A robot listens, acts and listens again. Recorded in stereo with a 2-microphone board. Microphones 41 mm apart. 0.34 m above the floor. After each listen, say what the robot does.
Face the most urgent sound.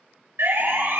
Turn 75° right.
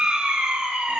Turn 25° right.
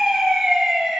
Found it: a siren, straight ahead.